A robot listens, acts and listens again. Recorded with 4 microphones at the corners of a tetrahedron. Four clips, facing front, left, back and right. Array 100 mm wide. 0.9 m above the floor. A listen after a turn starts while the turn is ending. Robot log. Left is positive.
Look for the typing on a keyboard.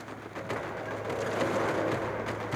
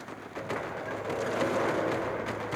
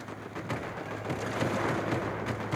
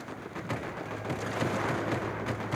cmd idle
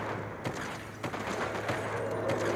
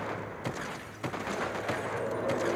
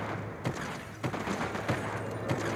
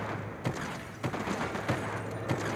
cmd idle
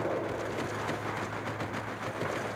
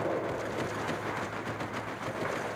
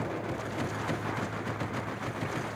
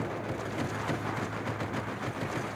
end: I can't make out typing on a keyboard.